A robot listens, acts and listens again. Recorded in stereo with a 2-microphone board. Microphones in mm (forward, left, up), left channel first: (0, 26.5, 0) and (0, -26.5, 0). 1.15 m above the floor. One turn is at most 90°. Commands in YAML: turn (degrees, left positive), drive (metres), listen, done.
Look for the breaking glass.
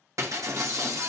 turn: -90
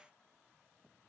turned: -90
done: "I heard breaking glass from this way, but can't make it out now."